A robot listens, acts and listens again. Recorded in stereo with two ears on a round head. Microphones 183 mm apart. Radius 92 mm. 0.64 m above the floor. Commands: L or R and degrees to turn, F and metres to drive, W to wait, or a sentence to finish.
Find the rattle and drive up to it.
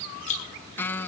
L35
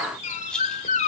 F1.0
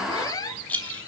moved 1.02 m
L10
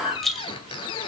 F1.0
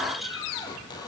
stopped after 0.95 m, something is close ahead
W
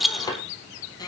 Arrived at the rattle, straight ahead.